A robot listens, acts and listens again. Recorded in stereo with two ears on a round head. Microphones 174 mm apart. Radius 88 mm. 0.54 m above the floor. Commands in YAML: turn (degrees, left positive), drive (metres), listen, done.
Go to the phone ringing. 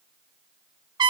listen: true
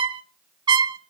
listen: true
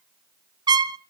done: "I can't make out a phone ringing to turn to."